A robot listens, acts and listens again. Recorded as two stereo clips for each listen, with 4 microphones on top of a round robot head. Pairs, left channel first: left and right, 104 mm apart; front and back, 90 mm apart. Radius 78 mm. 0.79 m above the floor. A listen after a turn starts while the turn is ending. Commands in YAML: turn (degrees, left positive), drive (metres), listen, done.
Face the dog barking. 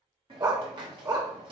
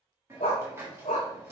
turn: -40
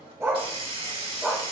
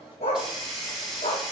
turn: -10
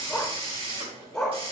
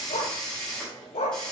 done: "Facing the dog barking."